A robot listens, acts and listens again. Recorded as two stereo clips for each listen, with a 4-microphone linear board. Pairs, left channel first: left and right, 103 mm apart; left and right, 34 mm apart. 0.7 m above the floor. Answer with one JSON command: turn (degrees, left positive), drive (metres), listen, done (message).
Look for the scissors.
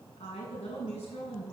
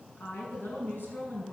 {"listen": true}
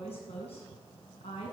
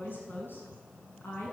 {"listen": true}
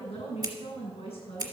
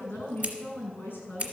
{"turn": -35}
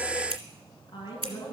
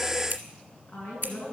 {"turn": -105}
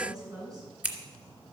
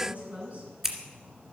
{"turn": -20}
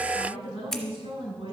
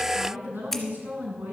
{"done": "Facing the scissors."}